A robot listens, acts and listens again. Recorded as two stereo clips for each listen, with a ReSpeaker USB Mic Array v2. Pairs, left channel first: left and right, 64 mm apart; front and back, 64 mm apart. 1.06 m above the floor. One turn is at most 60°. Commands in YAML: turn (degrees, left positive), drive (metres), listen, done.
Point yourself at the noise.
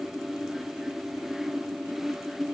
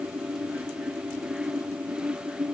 listen: true
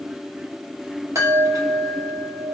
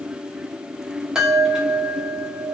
turn: -60
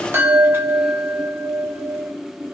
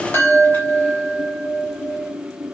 turn: -45
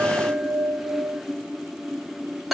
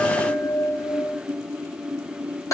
done: "Facing the chime."